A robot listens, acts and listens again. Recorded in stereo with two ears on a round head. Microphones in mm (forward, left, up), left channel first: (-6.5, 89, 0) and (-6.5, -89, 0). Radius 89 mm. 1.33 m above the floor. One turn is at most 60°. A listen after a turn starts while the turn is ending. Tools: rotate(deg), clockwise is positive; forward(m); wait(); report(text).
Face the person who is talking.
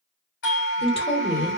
rotate(-30)
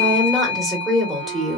report("Facing the woman speaking.")